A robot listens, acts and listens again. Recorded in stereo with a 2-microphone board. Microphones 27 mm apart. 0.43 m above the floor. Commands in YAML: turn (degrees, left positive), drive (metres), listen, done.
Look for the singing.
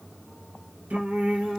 turn: -90
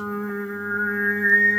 done: "Found it: singing, straight ahead, 1 to 2 m away."